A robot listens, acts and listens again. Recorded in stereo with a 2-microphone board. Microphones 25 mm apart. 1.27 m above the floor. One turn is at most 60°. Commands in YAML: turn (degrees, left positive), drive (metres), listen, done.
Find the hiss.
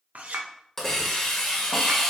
turn: 30
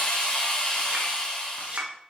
turn: 60
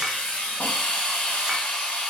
turn: 60
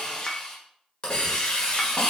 turn: 40
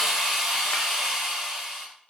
turn: -15
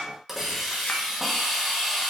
turn: -10
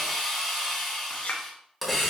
done: "Found it: a hiss, straight ahead, 1 to 2 m away."